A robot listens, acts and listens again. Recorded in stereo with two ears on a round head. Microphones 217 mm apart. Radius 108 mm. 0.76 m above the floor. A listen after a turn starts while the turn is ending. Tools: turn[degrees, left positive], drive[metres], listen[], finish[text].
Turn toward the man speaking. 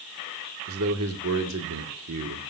Thought: The man speaking: about 70° right or 110° right.
Action: turn[-70]
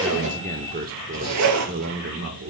Thought: So it is at 55° right.
Action: turn[-55]
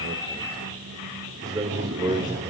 Thought: The man speaking is now 20° right.
Action: turn[-20]
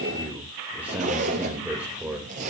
Action: finish[Found it: a man speaking, straight ahead.]